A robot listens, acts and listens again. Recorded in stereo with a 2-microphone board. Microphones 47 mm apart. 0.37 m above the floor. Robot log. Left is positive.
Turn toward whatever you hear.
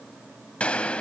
note: The gunshot: about 25° left or 155° left.
cmd yaw +25
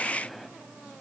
end: Found it: a gunshot, straight ahead, 1 to 2 m away.